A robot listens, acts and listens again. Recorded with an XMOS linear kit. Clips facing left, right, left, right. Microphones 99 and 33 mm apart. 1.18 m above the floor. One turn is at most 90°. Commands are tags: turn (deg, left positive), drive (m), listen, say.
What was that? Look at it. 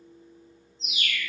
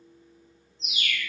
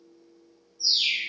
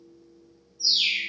<turn deg="-65"/>
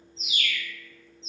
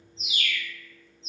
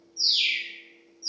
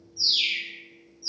<turn deg="-15"/>
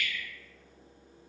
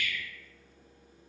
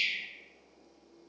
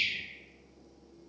<say>Facing the bird, 1 to 2 m away.</say>